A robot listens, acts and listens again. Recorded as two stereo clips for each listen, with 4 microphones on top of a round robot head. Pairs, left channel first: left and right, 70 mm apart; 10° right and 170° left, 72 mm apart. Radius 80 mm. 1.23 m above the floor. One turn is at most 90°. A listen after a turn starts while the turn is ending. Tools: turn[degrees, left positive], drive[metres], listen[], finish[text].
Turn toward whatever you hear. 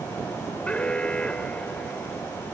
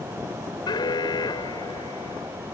Thought: The alarm: 10° left.
Action: turn[10]
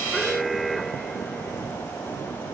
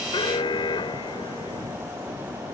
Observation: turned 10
Action: finish[Found it: an alarm, straight ahead.]